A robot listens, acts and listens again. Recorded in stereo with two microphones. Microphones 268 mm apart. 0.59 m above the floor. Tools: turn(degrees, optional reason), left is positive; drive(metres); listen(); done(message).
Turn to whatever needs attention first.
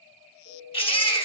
turn(degrees=20, reason="The baby crying: about 20° left or 160° left.")
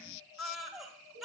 done("Found it: a baby crying, straight ahead.")